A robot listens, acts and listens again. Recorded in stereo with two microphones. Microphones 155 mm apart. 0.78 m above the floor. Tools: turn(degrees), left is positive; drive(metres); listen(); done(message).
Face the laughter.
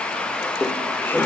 turn(degrees=30)
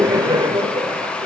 turn(degrees=-30)
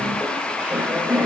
turn(degrees=-10)
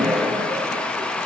done("Found it: laughter, straight ahead, 2 to 4 m away.")